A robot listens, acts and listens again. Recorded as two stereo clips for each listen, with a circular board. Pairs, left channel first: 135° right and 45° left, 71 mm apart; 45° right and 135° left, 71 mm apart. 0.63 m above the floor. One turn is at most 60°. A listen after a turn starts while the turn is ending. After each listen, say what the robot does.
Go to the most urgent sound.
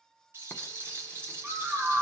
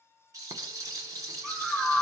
Turn 55° left.
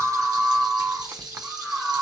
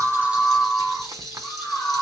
Drive 1.0 m forward.
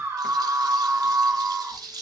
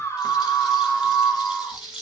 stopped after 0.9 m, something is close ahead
Arrived at the scream, straight ahead.